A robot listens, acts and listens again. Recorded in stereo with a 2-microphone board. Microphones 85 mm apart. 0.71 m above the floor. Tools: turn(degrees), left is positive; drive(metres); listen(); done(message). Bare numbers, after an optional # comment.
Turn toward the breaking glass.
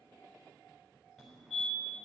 listen()
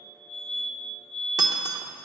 # The breaking glass: about 50° right or 130° right.
turn(-50)
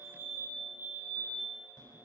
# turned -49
listen()
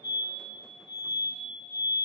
done("I heard breaking glass, but can't make it out now. It was about straight ahead or 80° right.")